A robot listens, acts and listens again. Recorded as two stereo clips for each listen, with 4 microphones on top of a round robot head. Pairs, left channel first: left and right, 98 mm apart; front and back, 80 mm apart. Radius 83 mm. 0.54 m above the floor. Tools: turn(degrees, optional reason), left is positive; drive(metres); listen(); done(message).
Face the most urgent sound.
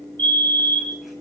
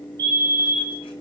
turn(degrees=-135, reason="The fire alarm: 135° right.")
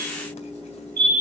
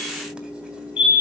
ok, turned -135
turn(degrees=-35, reason="The fire alarm is now 35° right.")
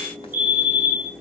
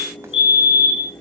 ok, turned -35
turn(degrees=-15, reason="The fire alarm is now 15° right.")
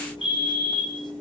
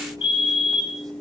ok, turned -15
done("Facing the fire alarm, over 4 m away.")